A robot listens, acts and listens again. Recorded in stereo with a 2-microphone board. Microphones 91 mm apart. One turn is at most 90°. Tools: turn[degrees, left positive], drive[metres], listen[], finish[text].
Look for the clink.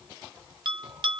Action: listen[]
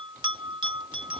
Action: listen[]
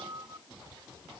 Action: finish[I can't make out a clink to turn to.]